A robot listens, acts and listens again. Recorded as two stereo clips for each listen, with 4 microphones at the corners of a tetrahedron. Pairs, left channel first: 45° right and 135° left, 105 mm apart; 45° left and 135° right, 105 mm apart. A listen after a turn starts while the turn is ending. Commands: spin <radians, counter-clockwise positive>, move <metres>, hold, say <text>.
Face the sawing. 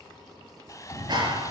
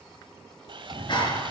spin -1.75
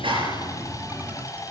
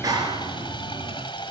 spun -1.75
spin 0.17
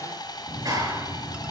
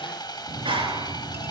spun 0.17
say Facing the sawing.